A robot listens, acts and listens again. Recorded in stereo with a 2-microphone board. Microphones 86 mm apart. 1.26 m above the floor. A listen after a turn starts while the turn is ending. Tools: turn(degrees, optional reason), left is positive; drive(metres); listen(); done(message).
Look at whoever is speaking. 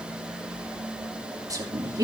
turn(degrees=-45, reason="The woman speaking: about 45° right or 135° right.")
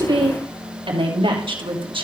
turn(degrees=-95, reason="So it is at 95° right.")
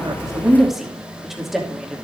done("Found it: a woman speaking, straight ahead.")